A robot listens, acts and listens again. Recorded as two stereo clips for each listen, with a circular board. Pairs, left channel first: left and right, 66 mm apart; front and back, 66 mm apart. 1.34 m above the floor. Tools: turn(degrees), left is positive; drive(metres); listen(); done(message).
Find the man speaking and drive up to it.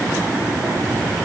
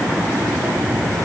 listen()
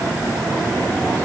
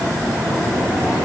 listen()
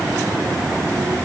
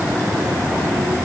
done("I can't make out a man speaking to turn to.")